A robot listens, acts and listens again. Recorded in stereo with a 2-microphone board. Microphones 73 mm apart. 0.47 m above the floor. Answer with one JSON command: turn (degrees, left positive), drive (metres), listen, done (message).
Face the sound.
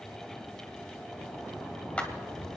{"turn": 15}
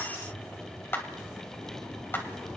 {"turn": 150}
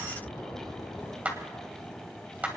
{"turn": -20}
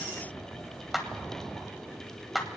{"done": "Facing the clap."}